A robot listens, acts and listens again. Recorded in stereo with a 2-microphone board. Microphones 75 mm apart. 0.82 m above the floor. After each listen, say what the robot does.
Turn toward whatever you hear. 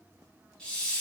Turn 30° left.
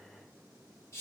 Turn 135° left.
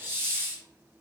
Turn 35° right.
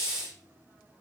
Turn 10° right.
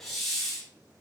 Facing the hiss, under 1 m away.